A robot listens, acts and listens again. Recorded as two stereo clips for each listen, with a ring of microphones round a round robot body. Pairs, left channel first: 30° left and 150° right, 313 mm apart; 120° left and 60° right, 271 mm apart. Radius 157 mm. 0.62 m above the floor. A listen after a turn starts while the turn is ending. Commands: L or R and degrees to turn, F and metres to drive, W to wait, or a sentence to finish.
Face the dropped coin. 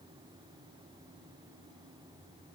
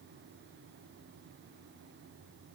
W
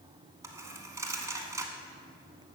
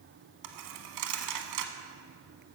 R70
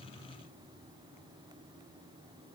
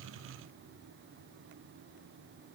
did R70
Facing where the dropped coin came from. I can't hear it now.